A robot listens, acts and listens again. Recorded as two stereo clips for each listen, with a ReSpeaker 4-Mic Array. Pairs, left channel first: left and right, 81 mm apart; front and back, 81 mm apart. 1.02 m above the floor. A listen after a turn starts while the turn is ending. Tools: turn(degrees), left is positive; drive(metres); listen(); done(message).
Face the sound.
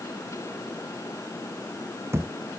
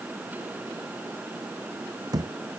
turn(degrees=-145)
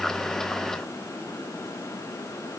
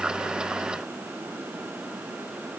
done("Facing where the thud came from. I can't hear it now.")